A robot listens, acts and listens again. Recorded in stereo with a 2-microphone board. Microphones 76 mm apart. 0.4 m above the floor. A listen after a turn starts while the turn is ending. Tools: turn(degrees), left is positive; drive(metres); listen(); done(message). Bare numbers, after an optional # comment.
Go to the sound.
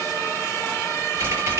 # The typing on a keyboard: about 30° right or 150° right.
turn(-30)
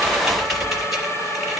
drive(1.0)
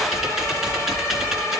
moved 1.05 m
drive(1.0)
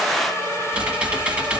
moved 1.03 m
# The typing on a keyboard is now 15° right.
turn(-15)
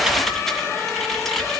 drive(1.0)
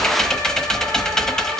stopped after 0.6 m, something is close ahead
# The typing on a keyboard is now 10° left.
turn(10)
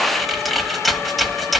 done("Arrived at the typing on a keyboard, straight ahead.")